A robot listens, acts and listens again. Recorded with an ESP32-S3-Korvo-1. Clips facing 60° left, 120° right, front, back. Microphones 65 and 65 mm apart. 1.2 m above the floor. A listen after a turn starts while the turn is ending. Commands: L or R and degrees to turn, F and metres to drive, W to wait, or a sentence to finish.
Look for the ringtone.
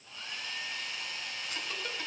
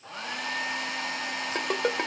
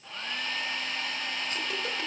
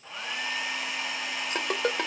R150
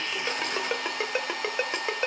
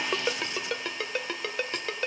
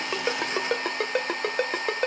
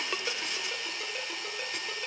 R10
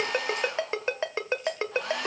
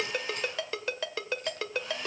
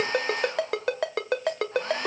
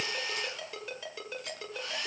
Found it: a ringtone, straight ahead.